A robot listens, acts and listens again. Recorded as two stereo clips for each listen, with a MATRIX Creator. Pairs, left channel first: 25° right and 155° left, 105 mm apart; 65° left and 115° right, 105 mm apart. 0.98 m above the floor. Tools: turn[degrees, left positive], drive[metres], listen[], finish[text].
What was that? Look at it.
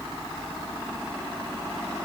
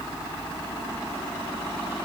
Action: listen[]
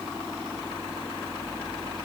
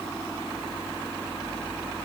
Action: listen[]
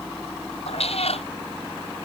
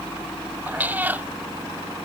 Thought: The cat meowing: 40° right.
Action: turn[-40]
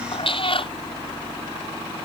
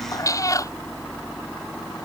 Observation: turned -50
Thought: The cat meowing is now 10° left.
Action: turn[10]
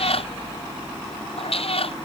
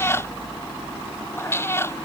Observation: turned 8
Action: finish[Facing the cat meowing.]